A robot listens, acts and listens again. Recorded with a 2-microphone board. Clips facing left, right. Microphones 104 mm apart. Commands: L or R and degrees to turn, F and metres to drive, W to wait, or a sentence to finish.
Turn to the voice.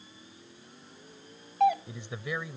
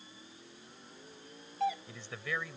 L15
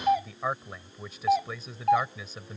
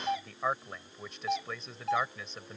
Found it: a man speaking, straight ahead.